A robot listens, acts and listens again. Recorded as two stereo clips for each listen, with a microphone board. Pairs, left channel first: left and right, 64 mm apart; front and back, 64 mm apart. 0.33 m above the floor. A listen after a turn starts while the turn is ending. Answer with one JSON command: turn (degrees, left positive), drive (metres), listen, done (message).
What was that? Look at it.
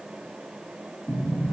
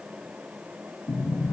{"turn": 10}
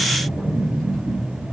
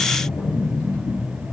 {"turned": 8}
{"done": "Facing the sliding door."}